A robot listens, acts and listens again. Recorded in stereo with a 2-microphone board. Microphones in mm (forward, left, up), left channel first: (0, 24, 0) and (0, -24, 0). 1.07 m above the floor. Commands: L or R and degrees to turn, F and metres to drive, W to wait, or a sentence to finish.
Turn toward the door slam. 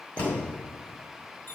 L20
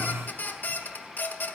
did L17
W
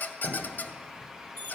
I heard a door slam, but can't make it out now. It was about 5° left or 140° left.